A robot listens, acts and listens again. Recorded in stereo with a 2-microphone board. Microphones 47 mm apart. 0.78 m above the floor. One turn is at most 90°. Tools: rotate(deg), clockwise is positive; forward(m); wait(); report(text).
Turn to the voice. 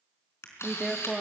rotate(-30)
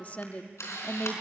rotate(-90)
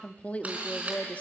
rotate(-30)
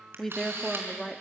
report("Facing the woman speaking.")